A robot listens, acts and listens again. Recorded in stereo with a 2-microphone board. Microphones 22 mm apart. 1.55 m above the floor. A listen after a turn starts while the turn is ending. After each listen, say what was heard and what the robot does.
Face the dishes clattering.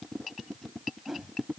Keep listening.
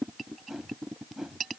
Keep listening.
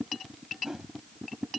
I can't make out dishes clattering, only a whoosh.